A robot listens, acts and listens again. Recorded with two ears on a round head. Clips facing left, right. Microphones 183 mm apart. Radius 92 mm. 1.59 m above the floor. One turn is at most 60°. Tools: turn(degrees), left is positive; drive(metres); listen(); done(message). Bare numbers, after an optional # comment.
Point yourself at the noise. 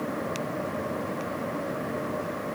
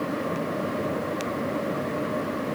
listen()
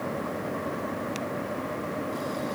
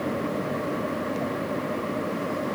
listen()
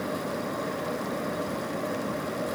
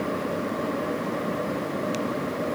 done("I can't make out anything to turn to.")